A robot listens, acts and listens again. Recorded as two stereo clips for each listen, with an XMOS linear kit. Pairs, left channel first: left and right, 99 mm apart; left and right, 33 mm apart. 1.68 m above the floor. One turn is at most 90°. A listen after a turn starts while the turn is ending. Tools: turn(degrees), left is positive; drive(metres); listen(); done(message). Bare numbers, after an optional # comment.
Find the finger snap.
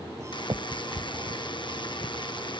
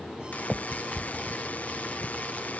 # The finger snap: about 50° right or 130° right.
turn(-50)
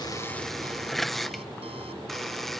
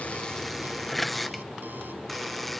listen()
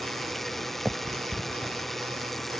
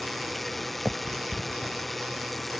done("Found it: a finger snap, straight ahead.")